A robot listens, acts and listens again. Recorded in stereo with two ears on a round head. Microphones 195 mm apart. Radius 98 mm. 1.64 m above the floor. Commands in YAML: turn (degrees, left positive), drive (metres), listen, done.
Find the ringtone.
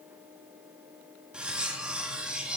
listen: true
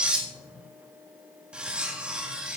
listen: true
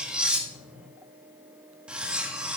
done: "I can't make out a ringtone, only cutlery clinking."